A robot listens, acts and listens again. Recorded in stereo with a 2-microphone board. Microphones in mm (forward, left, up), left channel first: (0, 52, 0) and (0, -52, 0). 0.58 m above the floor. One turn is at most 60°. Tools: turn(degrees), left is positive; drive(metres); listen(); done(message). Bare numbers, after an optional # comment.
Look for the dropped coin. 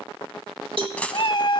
turn(30)
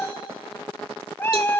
listen()
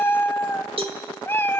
done("I heard a dropped coin, but can't make it out now. It was about 20° right or 140° left.")